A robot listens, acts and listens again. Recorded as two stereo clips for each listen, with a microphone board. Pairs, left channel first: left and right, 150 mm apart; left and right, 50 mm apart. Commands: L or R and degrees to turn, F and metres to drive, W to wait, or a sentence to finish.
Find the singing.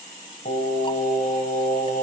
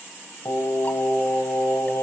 L75
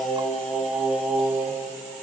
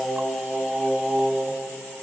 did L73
Facing the singing, 2 to 4 m away.